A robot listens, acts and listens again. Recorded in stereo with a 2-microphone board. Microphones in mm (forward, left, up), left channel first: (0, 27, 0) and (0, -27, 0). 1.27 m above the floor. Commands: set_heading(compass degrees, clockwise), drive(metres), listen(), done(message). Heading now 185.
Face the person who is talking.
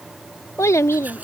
set_heading(115)
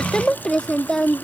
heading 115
set_heading(100)
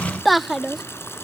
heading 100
done("Facing the child speaking.")